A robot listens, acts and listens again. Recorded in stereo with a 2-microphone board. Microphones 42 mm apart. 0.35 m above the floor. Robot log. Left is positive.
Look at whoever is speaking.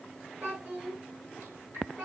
note: The child speaking: about 50° right or 130° right.
cmd yaw -50
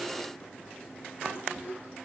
note: So it is at 75° right.
cmd yaw -75
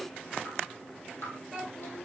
note: The child speaking is now 25° left.
cmd yaw +25
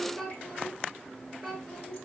end: Found it: a child speaking, straight ahead.